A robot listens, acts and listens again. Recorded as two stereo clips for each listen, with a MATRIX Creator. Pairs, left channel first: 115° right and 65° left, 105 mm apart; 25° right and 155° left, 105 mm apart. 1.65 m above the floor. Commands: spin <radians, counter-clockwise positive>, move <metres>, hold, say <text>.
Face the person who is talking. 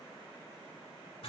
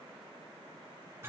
hold
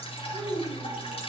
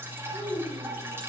spin -0.52
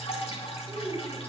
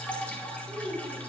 say Facing the child speaking, over 4 m away.